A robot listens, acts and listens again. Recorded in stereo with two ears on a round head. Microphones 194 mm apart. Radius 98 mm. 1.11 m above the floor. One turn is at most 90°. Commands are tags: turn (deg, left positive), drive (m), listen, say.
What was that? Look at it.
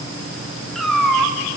<turn deg="30"/>
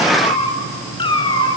<turn deg="90"/>
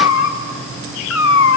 <turn deg="65"/>
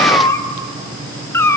<turn deg="10"/>
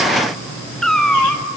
<say>Found it: a cat meowing, straight ahead, 1 to 2 m away.</say>